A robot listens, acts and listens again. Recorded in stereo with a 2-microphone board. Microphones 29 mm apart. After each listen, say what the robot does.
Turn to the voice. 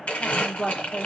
Turn 30° left.
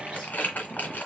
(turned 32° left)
Keep listening.
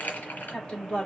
Turn 135° left.
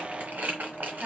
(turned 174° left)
Turn 35° right.
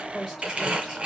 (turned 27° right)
Turn 10° right.
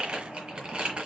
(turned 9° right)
Keep listening.
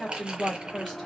Found it: a woman speaking, straight ahead, 2 to 4 m away.